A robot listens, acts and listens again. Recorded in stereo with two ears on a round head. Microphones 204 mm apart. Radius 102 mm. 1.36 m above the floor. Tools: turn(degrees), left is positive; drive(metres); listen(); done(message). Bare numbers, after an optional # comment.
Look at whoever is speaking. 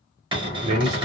turn(-90)
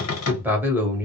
# So it is at 10° right.
turn(-10)
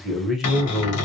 done("Facing the man speaking, under 1 m away.")